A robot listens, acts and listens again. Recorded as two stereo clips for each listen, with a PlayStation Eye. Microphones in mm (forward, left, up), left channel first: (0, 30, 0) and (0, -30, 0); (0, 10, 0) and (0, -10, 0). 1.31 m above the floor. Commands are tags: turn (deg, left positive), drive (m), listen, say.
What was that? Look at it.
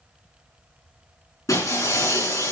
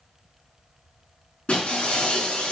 <turn deg="90"/>
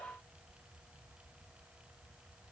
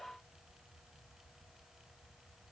<say>Facing where the breaking glass came from. I can't hear it now.</say>